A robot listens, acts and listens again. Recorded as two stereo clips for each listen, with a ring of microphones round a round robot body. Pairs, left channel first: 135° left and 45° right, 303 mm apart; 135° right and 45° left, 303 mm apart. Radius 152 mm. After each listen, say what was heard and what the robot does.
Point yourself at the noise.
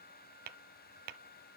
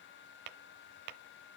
The tapping: 15° left. Turn 15° left.
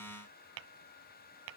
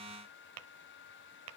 Found it: tapping, straight ahead, under 1 m away.